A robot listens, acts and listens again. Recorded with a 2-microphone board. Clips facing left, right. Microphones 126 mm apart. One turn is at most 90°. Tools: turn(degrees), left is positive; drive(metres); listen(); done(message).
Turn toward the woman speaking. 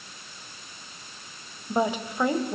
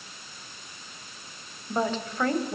turn(degrees=30)
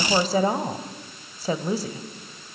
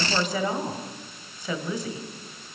turn(degrees=90)
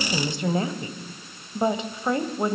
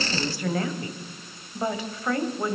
turn(degrees=25)
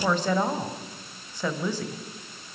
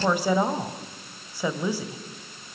turn(degrees=-15)
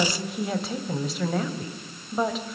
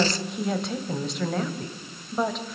done("Found it: a woman speaking, straight ahead, 1 to 2 m away.")